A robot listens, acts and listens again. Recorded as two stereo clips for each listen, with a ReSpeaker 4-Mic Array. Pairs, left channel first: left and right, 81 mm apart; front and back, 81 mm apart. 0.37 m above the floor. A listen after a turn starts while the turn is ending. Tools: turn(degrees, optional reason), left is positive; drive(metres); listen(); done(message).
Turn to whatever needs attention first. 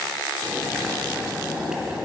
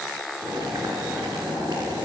listen()
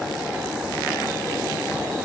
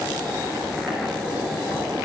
listen()
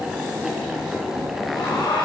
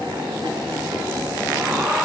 turn(degrees=110, reason="The alarm: 110° left.")
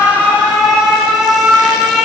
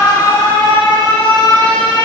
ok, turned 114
done("Facing the alarm.")